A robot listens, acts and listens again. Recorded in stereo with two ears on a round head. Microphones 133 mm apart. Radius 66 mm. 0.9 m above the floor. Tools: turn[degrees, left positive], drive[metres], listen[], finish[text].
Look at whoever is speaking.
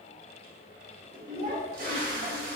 Thought: The child speaking: about 40° right or 140° right.
Action: turn[-40]
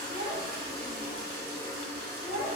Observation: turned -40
Action: finish[Facing the child speaking, 1 to 2 m away.]